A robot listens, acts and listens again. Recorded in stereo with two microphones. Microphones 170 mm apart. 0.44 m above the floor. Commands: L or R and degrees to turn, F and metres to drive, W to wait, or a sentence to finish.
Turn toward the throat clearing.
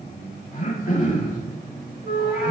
L50
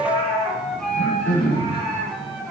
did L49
L80
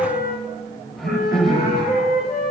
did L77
Found it: throat clearing, straight ahead, 1 to 2 m away.